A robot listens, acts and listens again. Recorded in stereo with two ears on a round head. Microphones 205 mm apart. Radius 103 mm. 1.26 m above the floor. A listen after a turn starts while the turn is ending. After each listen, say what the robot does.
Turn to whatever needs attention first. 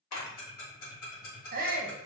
Turn 35° right.
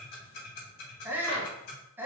Turn 10° right.
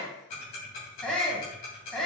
Facing the shout, under 1 m away.